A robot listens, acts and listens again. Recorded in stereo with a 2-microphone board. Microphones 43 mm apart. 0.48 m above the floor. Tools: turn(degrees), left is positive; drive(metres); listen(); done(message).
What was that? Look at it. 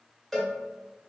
turn(degrees=30)
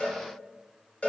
turn(degrees=140)
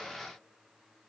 listen()
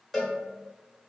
turn(degrees=10)
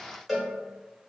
done("Found it: a cowbell, straight ahead.")